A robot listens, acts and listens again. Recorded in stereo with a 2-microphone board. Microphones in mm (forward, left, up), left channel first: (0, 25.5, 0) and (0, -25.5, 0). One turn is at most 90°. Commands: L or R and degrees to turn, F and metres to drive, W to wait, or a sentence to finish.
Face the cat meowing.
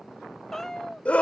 L30
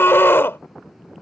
W
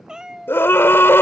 R10
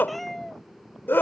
Found it: a cat meowing, straight ahead.